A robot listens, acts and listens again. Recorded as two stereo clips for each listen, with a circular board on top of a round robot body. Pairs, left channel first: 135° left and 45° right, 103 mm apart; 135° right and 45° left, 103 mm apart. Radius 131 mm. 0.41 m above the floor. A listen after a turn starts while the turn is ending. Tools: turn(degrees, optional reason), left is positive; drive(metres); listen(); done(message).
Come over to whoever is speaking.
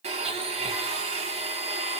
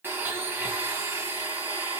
listen()
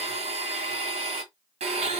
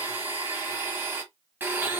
listen()
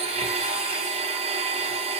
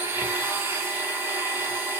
done("I can't make out anyone speaking to turn to.")